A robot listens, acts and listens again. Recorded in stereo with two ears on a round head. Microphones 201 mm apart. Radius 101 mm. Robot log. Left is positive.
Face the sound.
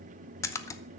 cmd yaw +30
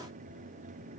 cmd idle
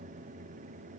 end: I heard a splash, but can't make it out now. It was about 15° right or 135° left.